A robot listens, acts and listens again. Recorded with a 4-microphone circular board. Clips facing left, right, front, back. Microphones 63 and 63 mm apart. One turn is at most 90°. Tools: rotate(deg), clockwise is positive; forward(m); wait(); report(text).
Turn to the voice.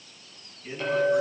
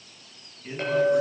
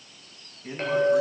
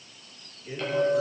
rotate(10)
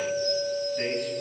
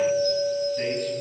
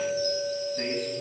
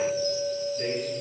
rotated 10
wait()
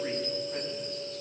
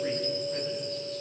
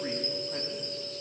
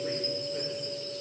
wait()
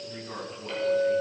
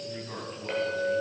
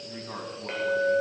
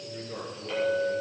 report("Found it: a man speaking, straight ahead.")